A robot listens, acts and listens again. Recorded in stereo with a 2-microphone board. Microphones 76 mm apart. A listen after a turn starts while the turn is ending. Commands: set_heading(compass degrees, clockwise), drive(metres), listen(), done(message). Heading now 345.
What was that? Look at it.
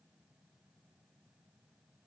listen()
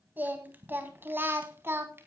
set_heading(15)
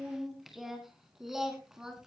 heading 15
done("Found it: singing, straight ahead.")